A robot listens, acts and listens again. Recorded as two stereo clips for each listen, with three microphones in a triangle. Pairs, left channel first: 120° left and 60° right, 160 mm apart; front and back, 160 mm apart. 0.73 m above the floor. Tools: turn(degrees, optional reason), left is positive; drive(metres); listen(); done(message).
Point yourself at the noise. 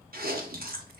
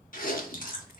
turn(degrees=-35, reason="The chewing: 35° right.")
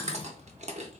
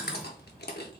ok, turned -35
turn(degrees=-10, reason="The chewing is now 10° right.")
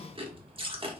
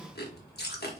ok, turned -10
done("Found it: chewing, straight ahead, under 1 m away.")